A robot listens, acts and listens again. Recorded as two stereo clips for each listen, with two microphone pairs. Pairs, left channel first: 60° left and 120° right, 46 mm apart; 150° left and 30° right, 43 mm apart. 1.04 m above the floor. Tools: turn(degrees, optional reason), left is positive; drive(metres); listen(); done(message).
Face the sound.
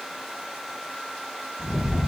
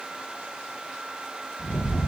turn(degrees=160, reason="The rattle: 160° left.")
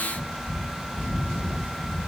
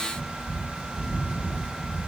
turn(degrees=-25, reason="The rattle is now 25° right.")
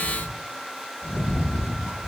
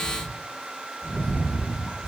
done("Found it: a rattle, straight ahead.")